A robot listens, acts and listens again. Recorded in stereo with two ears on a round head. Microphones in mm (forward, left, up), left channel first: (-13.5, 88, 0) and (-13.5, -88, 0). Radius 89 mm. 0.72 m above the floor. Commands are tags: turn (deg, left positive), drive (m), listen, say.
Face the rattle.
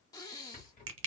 <turn deg="45"/>
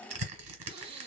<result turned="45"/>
<turn deg="85"/>
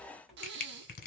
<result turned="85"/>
<say>Facing the rattle.</say>